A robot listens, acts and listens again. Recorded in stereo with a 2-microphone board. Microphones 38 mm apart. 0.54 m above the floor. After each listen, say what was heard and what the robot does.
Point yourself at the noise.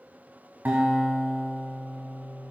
The guitar: about 50° right or 130° right. Turn 50° right.
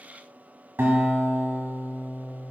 So it is at 85° right. Turn 85° right.
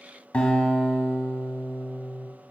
The guitar is now 30° left. Turn 30° left.
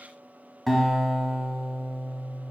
Found it: a guitar, straight ahead, 1 to 2 m away.